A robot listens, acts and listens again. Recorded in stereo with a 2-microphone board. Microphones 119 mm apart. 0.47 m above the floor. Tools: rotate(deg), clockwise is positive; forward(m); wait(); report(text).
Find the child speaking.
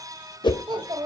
rotate(40)
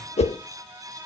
wait()
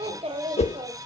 rotate(100)
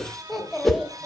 report("Found it: a child speaking, straight ahead.")